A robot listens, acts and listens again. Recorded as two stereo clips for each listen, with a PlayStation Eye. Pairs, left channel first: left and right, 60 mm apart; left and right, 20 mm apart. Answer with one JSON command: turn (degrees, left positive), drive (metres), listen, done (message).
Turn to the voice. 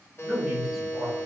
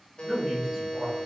{"turn": -30}
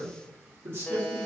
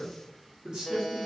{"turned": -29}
{"turn": -135}
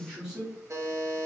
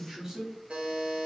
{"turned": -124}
{"turn": -10}
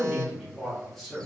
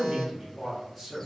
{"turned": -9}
{"done": "Found it: a man speaking, straight ahead."}